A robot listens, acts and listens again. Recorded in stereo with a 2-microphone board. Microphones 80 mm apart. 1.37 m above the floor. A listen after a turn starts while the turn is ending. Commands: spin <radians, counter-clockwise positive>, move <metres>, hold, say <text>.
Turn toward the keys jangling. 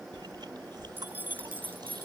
spin -0.44
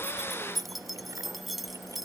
say Facing the keys jangling.